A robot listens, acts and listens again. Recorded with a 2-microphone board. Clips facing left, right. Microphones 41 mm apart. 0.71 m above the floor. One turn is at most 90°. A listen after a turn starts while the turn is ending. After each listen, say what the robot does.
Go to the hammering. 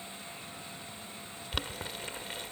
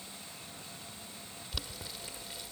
Keep listening.
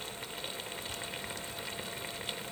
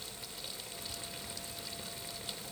Keep listening.
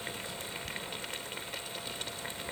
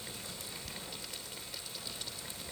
I can't make out hammering, only boiling.